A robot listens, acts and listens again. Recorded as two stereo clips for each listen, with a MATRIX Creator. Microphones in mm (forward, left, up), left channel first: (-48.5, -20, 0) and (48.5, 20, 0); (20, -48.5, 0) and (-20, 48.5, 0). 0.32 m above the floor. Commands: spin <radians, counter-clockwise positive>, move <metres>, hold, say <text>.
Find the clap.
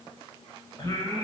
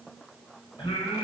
hold
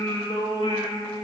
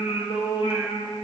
hold
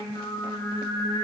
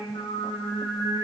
say I can't make out a clap, only singing.